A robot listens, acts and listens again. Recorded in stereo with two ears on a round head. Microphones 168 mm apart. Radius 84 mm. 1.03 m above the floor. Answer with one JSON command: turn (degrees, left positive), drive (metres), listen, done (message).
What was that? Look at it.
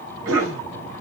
{"turn": -90}
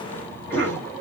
{"turn": 10}
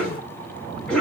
{"done": "Found it: a cough, straight ahead, over 4 m away."}